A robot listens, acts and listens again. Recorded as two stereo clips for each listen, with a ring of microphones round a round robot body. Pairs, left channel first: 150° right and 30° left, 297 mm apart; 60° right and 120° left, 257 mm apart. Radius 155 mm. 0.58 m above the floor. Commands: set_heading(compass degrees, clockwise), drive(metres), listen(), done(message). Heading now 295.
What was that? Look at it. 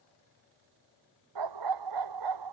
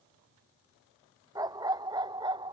set_heading(250)
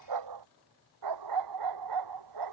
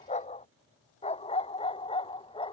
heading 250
set_heading(240)
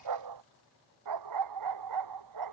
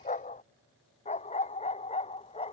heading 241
done("Found it: a dog barking, straight ahead.")